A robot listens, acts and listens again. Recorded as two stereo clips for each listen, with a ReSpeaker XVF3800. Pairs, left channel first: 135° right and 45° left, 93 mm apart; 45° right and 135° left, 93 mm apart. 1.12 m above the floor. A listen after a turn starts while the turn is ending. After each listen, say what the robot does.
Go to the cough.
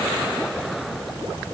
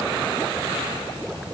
Keep listening.
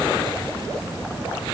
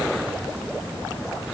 Keep listening.
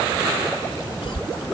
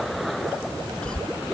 Turn 125° right.
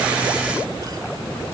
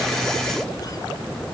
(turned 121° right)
Keep listening.
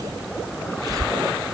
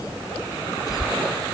Drive 1.0 m forward.
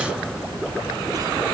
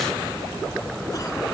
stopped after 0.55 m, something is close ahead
Keep listening.
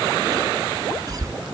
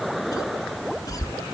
Something is in my way. I am facing the cough but have not reached it.